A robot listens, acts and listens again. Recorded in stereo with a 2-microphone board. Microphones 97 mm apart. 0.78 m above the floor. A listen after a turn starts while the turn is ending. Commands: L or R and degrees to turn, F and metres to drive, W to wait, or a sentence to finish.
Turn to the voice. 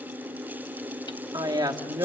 R45
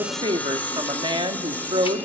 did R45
R85
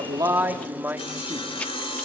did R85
R20
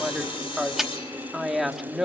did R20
Facing the woman speaking, 1 to 2 m away.